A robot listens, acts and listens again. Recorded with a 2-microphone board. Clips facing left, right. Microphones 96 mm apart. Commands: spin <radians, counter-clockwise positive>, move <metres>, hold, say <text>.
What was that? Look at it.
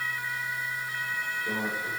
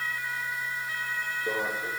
spin -0.70
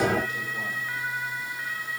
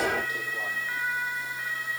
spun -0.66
hold
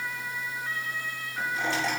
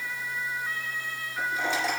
say Facing the microwave.